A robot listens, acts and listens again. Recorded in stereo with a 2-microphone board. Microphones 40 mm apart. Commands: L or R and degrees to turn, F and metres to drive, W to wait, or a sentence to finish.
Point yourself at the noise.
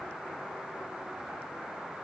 W
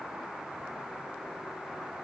W
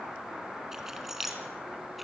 R30
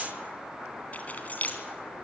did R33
L40
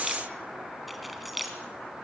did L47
Found it: keys jangling, straight ahead, 2 to 4 m away.